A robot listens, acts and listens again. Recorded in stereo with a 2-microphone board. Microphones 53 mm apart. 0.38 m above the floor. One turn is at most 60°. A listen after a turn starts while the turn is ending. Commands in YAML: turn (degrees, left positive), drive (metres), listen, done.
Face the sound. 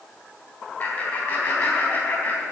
turn: 50
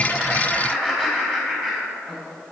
turn: 15
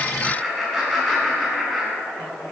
done: "Found it: laughter, straight ahead, over 4 m away."